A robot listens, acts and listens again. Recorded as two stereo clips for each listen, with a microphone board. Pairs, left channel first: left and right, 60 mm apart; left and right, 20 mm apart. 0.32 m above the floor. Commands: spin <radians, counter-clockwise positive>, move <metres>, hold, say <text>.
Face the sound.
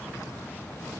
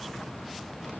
hold
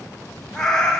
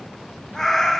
spin 0.52
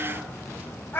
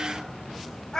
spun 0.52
spin 2.44
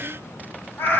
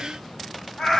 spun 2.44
spin 0.70
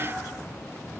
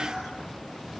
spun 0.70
hold
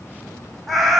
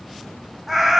say Facing the cat meowing, 1 to 2 m away.